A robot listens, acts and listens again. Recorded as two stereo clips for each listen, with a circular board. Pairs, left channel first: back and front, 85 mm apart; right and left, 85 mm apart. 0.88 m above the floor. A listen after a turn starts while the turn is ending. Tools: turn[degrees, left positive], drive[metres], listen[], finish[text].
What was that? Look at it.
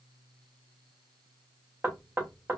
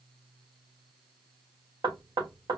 Thought: The knocking: 70° left.
Action: turn[70]
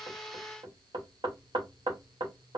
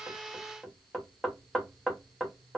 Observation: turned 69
Action: finish[Facing the knocking, under 1 m away.]